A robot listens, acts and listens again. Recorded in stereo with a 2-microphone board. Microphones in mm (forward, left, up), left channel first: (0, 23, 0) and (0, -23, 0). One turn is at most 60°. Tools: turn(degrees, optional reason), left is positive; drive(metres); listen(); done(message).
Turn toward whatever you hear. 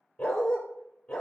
turn(degrees=15, reason="The dog barking: about 15° left or 165° left.")
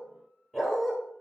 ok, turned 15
turn(degrees=-30)
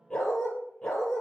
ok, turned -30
done("Found it: a dog barking, straight ahead.")